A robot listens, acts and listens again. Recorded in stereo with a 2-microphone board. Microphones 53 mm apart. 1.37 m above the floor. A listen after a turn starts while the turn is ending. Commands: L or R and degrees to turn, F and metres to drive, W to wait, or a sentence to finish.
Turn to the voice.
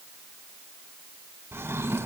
W
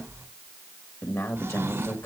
L60
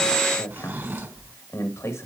L60
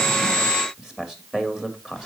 R10
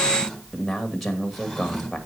Found it: a man speaking, straight ahead, 2 to 4 m away.